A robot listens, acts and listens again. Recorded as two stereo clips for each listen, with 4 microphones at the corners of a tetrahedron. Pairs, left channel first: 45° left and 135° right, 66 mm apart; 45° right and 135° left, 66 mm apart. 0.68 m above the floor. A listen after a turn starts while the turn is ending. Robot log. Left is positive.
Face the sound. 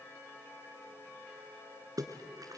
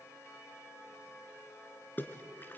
note: The splash: 105° right.
cmd yaw -105
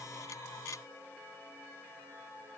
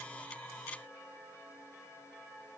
end: Facing where the splash came from. I can't hear it now.